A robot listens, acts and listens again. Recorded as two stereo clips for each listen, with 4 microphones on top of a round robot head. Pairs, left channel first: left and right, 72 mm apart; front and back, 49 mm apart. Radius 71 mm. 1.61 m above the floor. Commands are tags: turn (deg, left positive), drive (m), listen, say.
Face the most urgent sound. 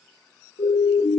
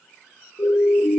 <turn deg="60"/>
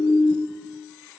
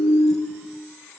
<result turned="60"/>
<turn deg="25"/>
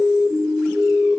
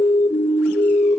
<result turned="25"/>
<say>Found it: a siren, straight ahead, 2 to 4 m away.</say>